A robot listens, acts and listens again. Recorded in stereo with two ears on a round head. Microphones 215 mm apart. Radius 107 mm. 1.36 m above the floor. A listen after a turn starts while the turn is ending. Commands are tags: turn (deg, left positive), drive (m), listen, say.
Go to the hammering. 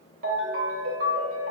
<listen/>
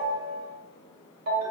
<listen/>
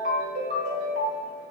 <say>I can't make out hammering to turn to.</say>